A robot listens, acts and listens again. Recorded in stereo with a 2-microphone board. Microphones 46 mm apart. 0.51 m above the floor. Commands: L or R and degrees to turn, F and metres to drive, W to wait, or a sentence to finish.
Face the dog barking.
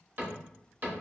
W
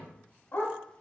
L45
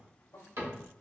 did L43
W
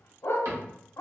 L95
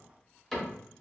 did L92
W
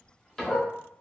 Facing the dog barking, under 1 m away.